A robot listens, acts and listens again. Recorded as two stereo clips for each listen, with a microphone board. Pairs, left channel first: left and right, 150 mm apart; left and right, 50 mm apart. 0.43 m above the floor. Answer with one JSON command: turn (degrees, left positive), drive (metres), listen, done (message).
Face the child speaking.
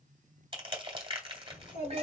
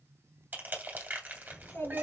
{"turn": 55}
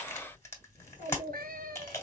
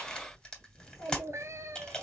{"turn": 65}
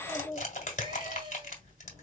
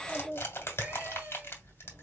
{"turn": 20}
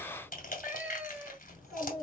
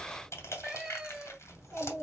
{"done": "Facing the child speaking, 2 to 4 m away."}